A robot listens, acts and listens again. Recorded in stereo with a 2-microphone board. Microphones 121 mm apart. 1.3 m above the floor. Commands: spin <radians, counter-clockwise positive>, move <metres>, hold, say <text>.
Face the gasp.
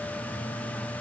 hold
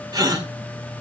spin -0.61
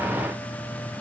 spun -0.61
hold
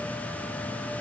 say I heard a gasp, but can't make it out now. It was about straight ahead or 110° right.